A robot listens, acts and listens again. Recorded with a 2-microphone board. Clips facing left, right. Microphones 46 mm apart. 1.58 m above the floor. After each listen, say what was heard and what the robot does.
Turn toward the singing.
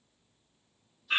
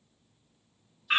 Keep listening.
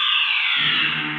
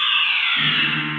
Turn 90° right.
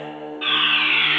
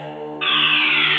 So it is at 15° left. Turn 15° left.
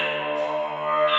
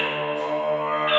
Found it: singing, straight ahead.